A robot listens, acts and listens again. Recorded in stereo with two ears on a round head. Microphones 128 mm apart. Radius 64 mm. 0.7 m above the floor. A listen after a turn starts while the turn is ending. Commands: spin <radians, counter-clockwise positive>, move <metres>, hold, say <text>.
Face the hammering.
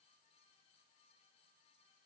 hold
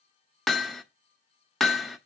spin 0.52
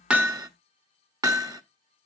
spin -0.52
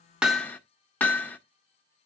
spin 0.26
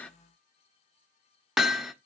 say Found it: hammering, straight ahead, under 1 m away.